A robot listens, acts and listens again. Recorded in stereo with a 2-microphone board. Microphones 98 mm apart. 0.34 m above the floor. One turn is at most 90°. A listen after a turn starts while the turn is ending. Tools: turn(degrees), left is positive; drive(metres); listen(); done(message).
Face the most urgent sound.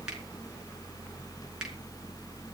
listen()
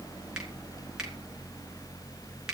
listen()
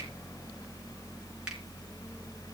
done("I can't make out anything urgent.")